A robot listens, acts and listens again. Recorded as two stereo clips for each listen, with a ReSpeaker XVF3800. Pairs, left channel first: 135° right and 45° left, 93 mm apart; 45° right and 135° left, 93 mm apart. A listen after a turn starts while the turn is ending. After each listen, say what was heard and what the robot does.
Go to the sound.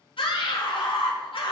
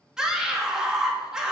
The scream: 140° right. Turn 140° right.
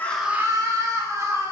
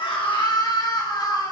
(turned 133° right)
Drive 1.0 m forward.
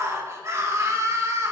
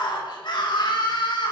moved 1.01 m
The scream is now 10° right. Turn 10° right.
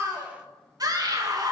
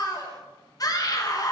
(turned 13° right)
Drive 1.0 m forward.
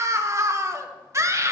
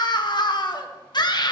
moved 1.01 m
The scream is now 10° right. Turn 10° right.
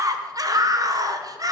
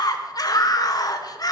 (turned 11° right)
Drive 1.0 m forward.
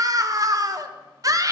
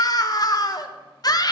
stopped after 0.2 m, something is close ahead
I am next to the scream.